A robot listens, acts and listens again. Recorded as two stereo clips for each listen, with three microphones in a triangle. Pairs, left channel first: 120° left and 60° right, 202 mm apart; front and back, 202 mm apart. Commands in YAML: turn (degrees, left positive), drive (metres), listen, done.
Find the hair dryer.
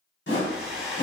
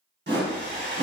turn: 30
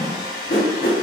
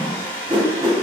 turn: 10
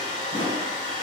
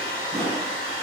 done: "Found it: a hair dryer, straight ahead, under 1 m away."